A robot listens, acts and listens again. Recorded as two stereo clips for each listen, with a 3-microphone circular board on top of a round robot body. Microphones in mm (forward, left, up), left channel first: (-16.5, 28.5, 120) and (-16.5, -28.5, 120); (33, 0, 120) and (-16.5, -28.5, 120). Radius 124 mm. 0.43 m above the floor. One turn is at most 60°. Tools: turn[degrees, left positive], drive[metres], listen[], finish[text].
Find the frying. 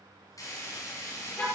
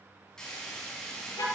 Thought: The frying: 110° left.
Action: turn[60]
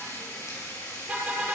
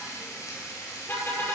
Thought: The frying is now 60° left.
Action: turn[60]
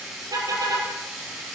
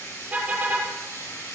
Action: finish[Found it: frying, straight ahead.]